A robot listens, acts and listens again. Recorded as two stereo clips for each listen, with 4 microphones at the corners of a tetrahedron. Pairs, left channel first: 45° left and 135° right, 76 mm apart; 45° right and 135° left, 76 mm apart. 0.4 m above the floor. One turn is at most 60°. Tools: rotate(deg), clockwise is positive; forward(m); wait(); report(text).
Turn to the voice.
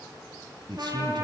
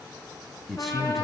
rotate(60)
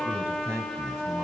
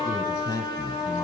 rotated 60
rotate(60)
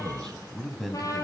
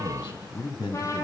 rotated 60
rotate(40)
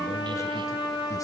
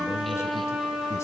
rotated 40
wait()
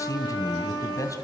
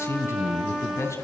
report("Facing the man speaking, 2 to 4 m away.")